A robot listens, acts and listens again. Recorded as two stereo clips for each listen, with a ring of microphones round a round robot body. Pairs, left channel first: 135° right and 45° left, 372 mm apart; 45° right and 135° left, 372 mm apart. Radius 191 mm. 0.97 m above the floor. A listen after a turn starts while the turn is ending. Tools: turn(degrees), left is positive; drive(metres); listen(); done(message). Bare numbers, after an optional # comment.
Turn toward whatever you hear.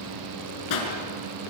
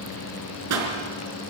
# The pop: 175° right.
turn(-175)
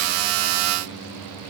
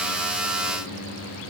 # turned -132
# Nothing new. It was at 40° right.
turn(-40)
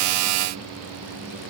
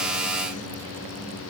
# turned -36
done("Facing where the pop came from. I can't hear it now.")